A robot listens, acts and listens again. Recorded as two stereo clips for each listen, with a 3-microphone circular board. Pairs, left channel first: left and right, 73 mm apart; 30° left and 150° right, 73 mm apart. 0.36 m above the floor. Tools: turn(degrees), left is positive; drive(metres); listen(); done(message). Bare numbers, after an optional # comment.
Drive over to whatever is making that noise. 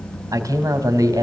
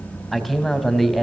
# The man speaking: 60° right.
turn(-60)
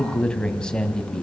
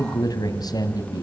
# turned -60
# The man speaking is now 15° left.
turn(15)
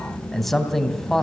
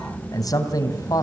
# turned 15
drive(1.0)
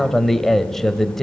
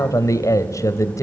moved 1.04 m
drive(1.0)
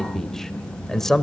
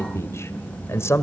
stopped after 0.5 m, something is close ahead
# The man speaking is now 10° left.
turn(10)
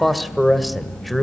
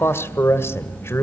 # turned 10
done("Arrived at the man speaking, straight ahead.")